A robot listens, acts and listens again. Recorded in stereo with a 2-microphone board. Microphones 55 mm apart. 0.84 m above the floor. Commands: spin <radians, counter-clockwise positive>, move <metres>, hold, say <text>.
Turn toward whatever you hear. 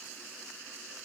hold
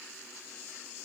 hold
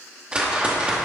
spin -0.35
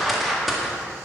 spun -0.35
say Found it: a whoosh, straight ahead.